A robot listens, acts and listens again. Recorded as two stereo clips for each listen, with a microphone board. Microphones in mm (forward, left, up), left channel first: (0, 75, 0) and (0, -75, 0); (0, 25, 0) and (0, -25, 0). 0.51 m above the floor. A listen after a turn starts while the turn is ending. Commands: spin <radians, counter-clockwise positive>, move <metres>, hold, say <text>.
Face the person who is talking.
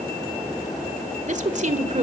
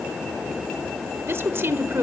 spin -0.87
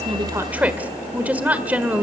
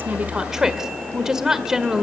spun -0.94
spin -0.17
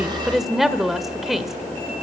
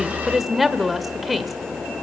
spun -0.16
say Facing the woman speaking.